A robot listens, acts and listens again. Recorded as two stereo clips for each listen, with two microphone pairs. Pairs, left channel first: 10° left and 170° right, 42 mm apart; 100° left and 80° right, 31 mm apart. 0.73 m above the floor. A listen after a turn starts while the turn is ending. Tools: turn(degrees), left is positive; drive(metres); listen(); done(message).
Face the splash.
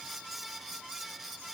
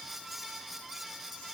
listen()
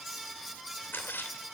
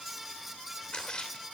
turn(degrees=40)
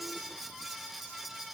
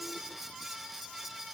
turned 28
turn(degrees=10)
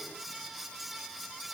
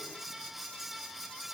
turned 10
done("Facing where the splash came from. I can't hear it now.")